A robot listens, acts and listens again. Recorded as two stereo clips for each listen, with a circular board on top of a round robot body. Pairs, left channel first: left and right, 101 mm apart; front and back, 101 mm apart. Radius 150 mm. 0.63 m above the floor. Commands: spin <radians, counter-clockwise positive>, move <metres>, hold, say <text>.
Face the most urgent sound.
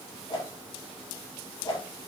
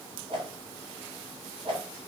hold
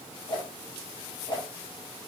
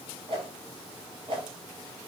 hold
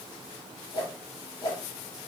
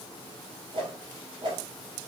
say I can't make out anything urgent to turn to.